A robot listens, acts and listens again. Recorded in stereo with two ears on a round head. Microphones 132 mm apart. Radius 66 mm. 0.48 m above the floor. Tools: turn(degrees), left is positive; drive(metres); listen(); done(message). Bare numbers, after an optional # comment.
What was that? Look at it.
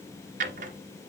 # The drawer: about 55° right or 125° right.
turn(-55)
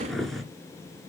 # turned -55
done("Facing the drawer.")